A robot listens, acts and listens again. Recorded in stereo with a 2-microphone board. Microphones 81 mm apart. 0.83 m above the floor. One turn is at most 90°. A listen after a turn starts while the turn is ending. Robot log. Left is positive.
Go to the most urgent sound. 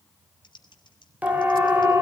note: The siren: about 20° right or 160° right.
cmd yaw -20
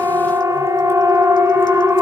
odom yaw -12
note: So it is at 150° right.
cmd yaw -90
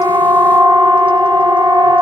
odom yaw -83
note: The siren is now 65° right.
cmd yaw -65
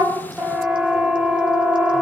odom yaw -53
note: The siren is now 10° right.
cmd yaw -10
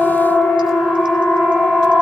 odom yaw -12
cmd fwd 1.0
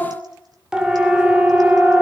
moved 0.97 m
note: The siren is now 10° right.
cmd yaw -10
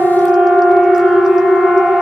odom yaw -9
cmd fwd 1.0
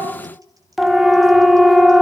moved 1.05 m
cmd fwd 1.0
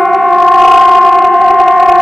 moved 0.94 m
cmd fwd 1.0
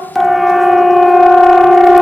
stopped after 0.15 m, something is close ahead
end: I am next to the siren.